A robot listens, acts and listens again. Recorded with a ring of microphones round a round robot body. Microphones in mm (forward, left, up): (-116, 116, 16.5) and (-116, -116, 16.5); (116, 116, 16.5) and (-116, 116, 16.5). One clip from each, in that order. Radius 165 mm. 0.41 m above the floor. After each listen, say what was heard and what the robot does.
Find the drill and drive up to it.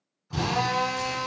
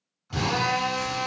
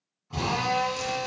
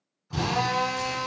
The drill: 90° right. Turn 90° right.
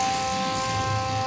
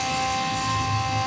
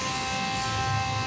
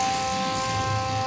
The drill is now 10° left. Turn 10° left.
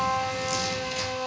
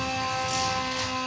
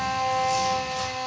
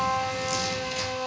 Drive 1.0 m forward.
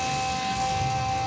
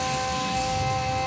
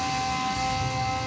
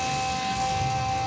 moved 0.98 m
The drill is now 10° left. Turn 10° left.
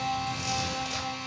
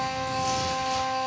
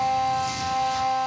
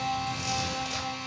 Drive 1.0 m forward.
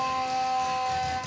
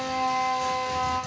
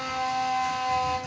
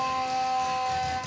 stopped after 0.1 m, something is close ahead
I am next to the drill.